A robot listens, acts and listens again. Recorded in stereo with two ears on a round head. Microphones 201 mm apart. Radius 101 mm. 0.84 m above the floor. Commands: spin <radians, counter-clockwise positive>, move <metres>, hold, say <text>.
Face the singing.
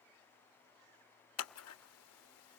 hold
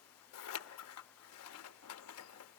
hold
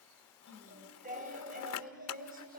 spin -0.70
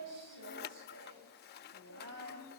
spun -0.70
spin -1.75
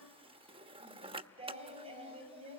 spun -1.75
spin -0.44
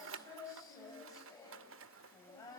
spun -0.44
spin 0.26
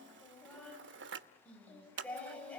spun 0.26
say Facing the singing.